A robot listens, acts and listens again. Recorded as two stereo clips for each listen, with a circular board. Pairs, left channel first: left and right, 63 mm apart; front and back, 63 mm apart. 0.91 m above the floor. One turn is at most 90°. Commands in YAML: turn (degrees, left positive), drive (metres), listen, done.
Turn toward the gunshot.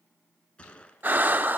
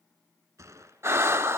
turn: 90
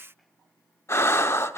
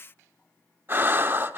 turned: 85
turn: 75
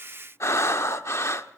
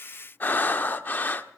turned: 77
done: "I heard a gunshot from this way, but can't make it out now."